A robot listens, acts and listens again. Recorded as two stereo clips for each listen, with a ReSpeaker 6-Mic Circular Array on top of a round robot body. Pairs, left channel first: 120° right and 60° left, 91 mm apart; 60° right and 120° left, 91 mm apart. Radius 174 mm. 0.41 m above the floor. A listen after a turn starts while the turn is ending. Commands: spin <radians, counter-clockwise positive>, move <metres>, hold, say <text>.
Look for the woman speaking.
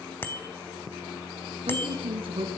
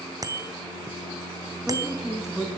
spin 0.61
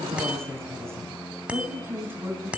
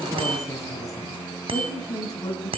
spin -0.17
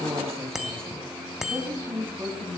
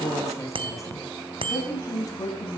spin -0.17
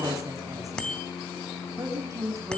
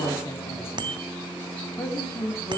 say Found it: a woman speaking, straight ahead, over 4 m away.